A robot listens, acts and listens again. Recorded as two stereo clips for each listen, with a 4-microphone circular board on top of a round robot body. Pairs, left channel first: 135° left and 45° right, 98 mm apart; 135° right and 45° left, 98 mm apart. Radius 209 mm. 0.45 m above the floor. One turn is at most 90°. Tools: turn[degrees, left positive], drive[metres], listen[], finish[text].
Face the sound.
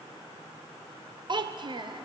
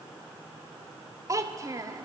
Thought: The child speaking: 10° right.
Action: turn[-10]
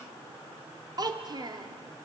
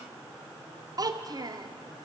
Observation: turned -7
Action: finish[Found it: a child speaking, straight ahead, 1 to 2 m away.]